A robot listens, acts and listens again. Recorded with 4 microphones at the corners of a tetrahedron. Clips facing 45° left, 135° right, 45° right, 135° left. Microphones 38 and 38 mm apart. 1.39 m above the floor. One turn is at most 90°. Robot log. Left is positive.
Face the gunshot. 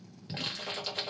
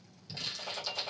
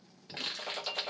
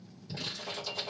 note: The gunshot: 55° right.
cmd yaw -55
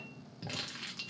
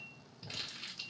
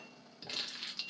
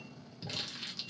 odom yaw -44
note: Nothing new. It was at 10° right.
cmd yaw -10
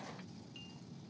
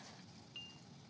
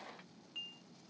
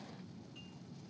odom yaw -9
end: I heard a gunshot from this way, but can't make it out now.